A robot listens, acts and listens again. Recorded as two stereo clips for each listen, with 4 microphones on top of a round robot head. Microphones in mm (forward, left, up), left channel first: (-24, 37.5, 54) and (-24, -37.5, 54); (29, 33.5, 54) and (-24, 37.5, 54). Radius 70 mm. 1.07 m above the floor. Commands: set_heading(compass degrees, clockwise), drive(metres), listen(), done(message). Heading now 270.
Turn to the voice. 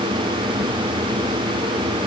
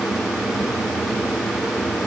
listen()
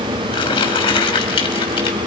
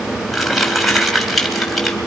listen()
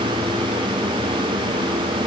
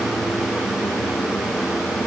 done("I can't make out anyone speaking to turn to.")